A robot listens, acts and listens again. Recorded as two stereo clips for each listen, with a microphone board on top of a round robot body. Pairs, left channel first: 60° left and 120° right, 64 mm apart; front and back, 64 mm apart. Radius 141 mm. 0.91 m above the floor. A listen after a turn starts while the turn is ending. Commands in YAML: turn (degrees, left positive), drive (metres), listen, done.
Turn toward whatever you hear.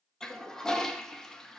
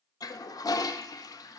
turn: -20
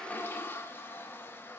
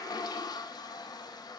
done: "Facing the toilet flushing."